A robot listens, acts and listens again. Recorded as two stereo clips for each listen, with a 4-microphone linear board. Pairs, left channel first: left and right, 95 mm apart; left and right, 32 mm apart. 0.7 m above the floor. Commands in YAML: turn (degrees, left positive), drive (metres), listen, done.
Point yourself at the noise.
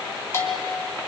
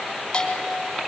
turn: 25
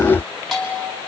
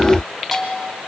done: "Found it: a bell, straight ahead."